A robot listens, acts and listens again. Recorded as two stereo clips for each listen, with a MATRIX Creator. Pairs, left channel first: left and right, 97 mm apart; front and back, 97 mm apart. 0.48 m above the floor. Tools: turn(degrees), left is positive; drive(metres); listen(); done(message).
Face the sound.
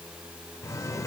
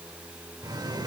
turn(degrees=140)
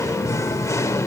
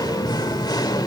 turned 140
turn(degrees=35)
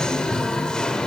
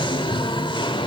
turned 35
turn(degrees=10)
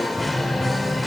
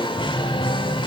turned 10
done("Facing the singing, 1 to 2 m away.")